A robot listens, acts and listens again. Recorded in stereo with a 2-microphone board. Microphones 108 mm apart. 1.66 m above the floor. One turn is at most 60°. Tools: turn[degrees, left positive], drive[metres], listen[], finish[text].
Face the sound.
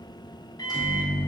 Thought: The microwave: about 35° left or 145° left.
Action: turn[35]
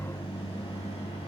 Thought: So it is at 105° left.
Action: turn[60]
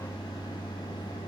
Thought: The microwave is now 40° left.
Action: turn[40]
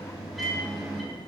Action: finish[Found it: a microwave, straight ahead, under 1 m away.]